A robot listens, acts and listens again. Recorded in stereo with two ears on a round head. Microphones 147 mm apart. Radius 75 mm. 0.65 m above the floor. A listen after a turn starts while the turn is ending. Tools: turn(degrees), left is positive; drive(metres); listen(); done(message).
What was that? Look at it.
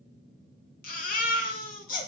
turn(degrees=60)
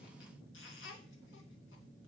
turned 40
turn(degrees=80)
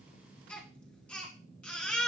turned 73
done("Found it: a baby crying, straight ahead.")